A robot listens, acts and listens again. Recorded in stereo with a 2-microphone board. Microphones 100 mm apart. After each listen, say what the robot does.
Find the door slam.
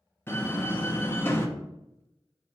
Turn 25° left.
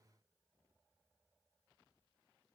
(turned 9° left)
Keep listening.
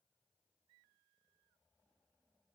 I heard a door slam, but can't make it out now. It was about 15° left or 145° left.